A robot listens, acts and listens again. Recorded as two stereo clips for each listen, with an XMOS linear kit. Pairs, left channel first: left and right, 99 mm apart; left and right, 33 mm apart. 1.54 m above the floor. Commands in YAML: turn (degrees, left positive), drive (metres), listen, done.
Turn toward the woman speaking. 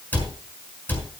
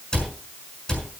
listen: true
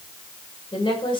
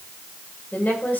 turn: 55
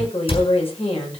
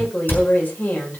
turn: 75
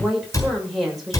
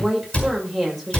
done: "Found it: a woman speaking, straight ahead."